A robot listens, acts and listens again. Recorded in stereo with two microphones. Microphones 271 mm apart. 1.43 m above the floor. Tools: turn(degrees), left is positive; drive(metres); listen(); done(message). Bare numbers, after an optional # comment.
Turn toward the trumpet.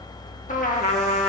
# The trumpet: about 30° left or 150° left.
turn(30)
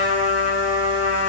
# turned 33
# So it is at 120° left.
turn(120)
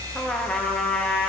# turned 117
done("Found it: a trumpet, straight ahead.")